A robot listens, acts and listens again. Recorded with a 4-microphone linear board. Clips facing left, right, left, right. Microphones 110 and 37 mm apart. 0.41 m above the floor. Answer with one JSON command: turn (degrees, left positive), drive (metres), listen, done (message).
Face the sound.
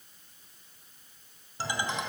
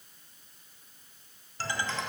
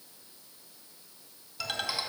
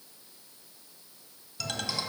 {"turn": 15}
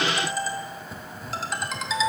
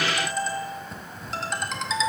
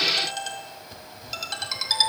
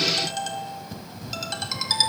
{"done": "Found it: a ringtone, straight ahead, 1 to 2 m away."}